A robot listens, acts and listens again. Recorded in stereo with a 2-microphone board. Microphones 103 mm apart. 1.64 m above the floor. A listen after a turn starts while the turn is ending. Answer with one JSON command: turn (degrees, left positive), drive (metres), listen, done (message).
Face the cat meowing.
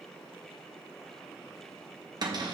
{"listen": true}
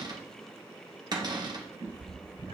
{"turn": -90}
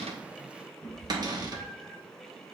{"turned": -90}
{"turn": 10}
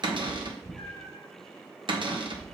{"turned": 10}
{"done": "Facing the cat meowing."}